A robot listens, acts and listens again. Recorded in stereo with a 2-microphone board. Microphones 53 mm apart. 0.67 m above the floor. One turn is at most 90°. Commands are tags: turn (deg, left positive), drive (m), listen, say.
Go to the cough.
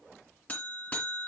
<listen/>
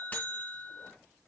<listen/>
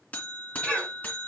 <turn deg="25"/>
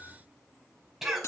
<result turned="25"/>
<drive m="1.0"/>
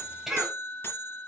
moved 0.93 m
<turn deg="-10"/>
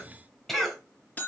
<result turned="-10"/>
<drive m="1.0"/>
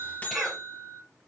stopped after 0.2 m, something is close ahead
<say>Something is in my way. I am facing the cough but have not reached it.</say>